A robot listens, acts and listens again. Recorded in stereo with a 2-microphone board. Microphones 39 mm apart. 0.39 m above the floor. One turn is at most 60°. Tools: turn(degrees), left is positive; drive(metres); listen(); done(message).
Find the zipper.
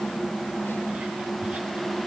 listen()
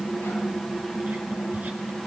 listen()
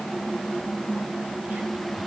done("I can't make out a zipper.")